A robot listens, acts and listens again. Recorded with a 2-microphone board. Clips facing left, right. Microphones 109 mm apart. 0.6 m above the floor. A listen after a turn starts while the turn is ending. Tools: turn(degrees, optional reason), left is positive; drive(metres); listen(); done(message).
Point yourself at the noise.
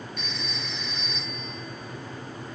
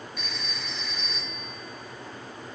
turn(degrees=-30)
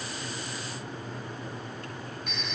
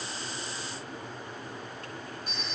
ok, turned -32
turn(degrees=-145, reason="So it is at 145° right.")
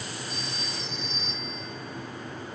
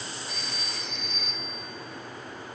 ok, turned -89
turn(degrees=-55, reason="The phone ringing is now 55° right.")
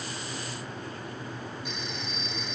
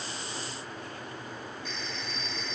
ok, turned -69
turn(degrees=15, reason="The phone ringing is now 15° left.")
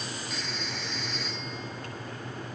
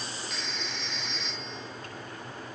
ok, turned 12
done("Facing the phone ringing, over 4 m away.")